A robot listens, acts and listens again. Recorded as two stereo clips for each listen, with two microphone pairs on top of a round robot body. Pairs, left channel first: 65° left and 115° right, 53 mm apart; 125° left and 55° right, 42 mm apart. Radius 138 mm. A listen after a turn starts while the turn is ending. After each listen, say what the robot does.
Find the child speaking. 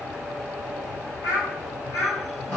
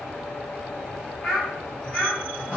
Turn 55° left.
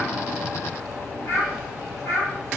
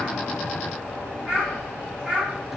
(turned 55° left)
Turn 15° left.
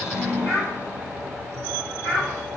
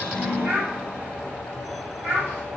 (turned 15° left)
Found it: a child speaking, straight ahead.